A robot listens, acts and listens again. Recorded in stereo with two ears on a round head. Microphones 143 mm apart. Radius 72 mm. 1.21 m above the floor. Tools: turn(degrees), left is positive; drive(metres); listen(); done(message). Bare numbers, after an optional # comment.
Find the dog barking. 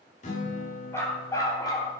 # The dog barking: about 25° left or 155° left.
turn(25)
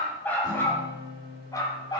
# The dog barking: about 25° left or 155° left.
turn(25)
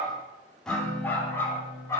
# The dog barking: about 20° left or 160° left.
turn(20)
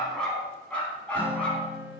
turn(30)
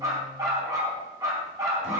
# So it is at 20° right.
turn(-20)
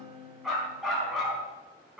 done("Found it: a dog barking, straight ahead.")